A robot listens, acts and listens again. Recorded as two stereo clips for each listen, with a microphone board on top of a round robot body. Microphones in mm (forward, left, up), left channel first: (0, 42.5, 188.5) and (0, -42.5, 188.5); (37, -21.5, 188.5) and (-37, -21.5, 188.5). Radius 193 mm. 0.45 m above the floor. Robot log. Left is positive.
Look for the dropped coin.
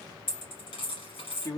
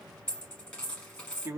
note: The dropped coin: 80° left.
cmd yaw +80
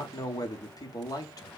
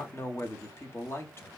end: I heard a dropped coin from this way, but can't make it out now.